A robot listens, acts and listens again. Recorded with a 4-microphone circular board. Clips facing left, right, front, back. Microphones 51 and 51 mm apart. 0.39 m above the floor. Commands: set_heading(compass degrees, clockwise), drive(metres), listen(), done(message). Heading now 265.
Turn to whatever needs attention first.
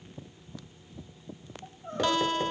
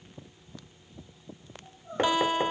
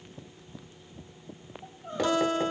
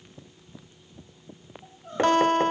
set_heading(185)
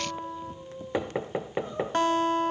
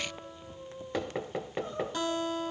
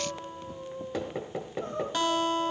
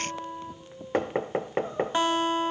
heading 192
set_heading(182)
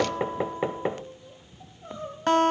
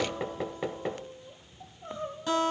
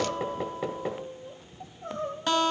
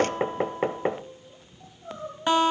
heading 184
done("Facing the crying.")